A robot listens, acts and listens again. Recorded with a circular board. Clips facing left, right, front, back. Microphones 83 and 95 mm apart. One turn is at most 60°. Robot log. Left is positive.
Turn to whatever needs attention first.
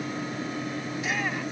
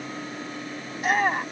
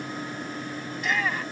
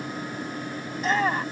note: The shout: 130° right.
cmd yaw -60
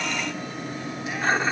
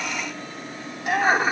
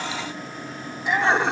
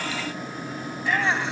note: The shout is now 70° right.
cmd yaw -60
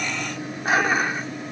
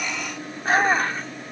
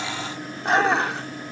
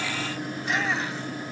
note: Nothing new. It was at 10° right.
cmd yaw -10
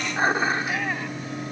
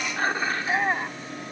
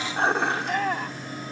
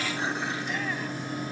note: The shout is now 30° right.
cmd yaw -30
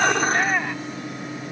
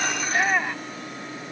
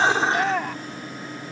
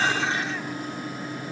end: Facing the shout.